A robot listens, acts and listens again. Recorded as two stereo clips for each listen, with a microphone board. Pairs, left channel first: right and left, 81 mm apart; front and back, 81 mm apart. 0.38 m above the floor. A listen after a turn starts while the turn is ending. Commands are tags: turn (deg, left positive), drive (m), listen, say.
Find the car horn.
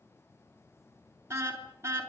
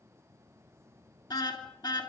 <turn deg="35"/>
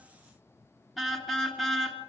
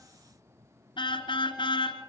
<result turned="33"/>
<say>Facing the car horn, 2 to 4 m away.</say>